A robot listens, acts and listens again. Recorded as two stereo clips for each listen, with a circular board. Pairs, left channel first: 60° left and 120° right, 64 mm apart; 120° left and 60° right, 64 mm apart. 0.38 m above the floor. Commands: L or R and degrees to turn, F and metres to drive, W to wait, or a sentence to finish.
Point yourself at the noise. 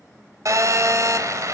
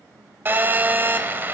R110
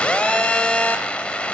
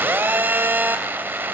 Facing the phone buzzing.